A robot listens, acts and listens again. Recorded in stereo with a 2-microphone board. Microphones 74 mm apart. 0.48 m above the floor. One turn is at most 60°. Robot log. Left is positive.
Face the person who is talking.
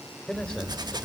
note: The man speaking: about 20° left or 160° left.
cmd yaw +20
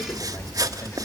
cmd idle
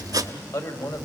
note: So it is at 130° left.
cmd yaw +60
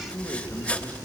note: The man speaking is now 35° left.
cmd yaw +35
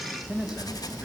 note: The man speaking is now 10° right.
cmd yaw -10
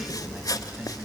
cmd idle
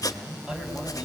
note: The man speaking is now 10° right.
cmd yaw -10
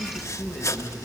end: Facing the man speaking.